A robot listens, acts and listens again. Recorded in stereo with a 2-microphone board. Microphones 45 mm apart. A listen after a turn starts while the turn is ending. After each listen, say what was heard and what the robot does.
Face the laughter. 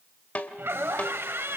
The laughter: about 70° right or 110° right. Turn 70° right.
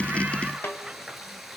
Keep listening.
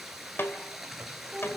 Found it: laughter, straight ahead, 2 to 4 m away.